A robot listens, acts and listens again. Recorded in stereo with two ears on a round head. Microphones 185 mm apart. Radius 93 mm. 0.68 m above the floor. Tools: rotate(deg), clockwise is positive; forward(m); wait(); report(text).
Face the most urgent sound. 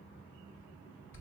wait()
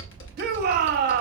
rotate(50)
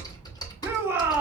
rotate(15)
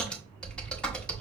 wait()
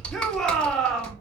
report("Found it: a shout, straight ahead.")